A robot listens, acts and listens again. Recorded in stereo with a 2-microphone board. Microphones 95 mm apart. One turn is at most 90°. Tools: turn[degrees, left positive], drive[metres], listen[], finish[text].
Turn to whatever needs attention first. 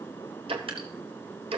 Action: listen[]
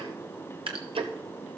Action: listen[]
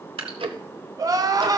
Thought: The crying: about 40° right or 140° right.
Action: turn[-40]
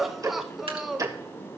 Action: finish[Found it: crying, straight ahead, under 1 m away.]